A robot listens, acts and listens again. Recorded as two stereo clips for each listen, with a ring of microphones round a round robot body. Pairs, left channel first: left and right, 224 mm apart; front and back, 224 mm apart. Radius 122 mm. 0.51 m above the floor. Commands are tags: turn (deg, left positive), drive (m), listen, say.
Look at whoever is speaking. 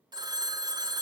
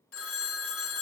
<listen/>
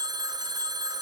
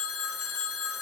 <listen/>
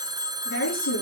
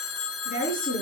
<turn deg="60"/>
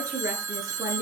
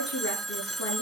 <turn deg="-15"/>
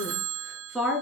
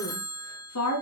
<say>Found it: a woman speaking, straight ahead, over 4 m away.</say>